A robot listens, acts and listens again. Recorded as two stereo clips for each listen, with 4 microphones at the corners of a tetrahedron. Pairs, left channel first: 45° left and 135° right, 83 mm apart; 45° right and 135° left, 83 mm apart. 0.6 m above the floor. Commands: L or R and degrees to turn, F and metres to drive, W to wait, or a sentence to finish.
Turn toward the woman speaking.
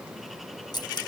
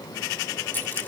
W
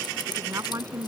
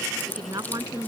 L175
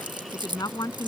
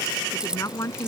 Found it: a woman speaking, straight ahead.